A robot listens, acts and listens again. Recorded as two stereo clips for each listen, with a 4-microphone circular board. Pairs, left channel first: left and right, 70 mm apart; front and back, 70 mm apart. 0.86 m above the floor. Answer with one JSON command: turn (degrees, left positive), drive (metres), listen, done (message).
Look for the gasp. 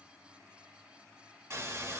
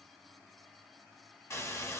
{"listen": true}
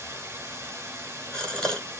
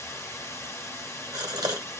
{"turn": 165}
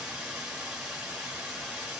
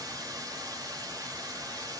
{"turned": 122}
{"turn": 45}
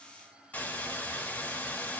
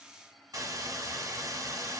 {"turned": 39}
{"done": "I heard a gasp from this way, but can't make it out now."}